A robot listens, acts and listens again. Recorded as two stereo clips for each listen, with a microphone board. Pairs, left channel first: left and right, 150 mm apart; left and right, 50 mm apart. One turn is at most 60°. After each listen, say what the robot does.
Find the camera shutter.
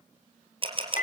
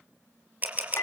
Turn 35° right.
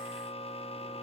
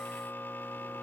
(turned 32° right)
Keep listening.
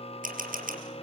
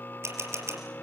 Turn 60° right.
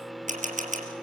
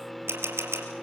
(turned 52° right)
Turn 60° right.
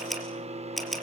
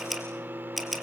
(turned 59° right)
Found it: a camera shutter, straight ahead, 2 to 4 m away.